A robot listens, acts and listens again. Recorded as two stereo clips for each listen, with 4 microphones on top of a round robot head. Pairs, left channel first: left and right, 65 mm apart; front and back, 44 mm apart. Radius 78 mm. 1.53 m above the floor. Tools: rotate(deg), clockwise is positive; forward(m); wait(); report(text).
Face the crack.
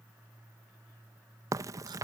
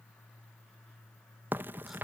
rotate(130)
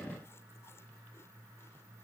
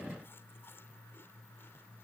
report("Facing where the crack came from. I can't hear it now.")